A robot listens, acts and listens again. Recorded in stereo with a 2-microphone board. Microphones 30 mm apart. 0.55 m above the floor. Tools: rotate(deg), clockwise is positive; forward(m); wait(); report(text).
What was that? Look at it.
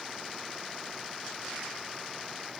wait()
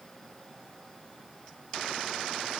wait()
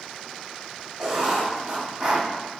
rotate(25)
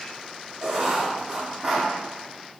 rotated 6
rotate(20)
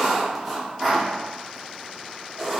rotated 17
report("Found it: writing, straight ahead, 1 to 2 m away.")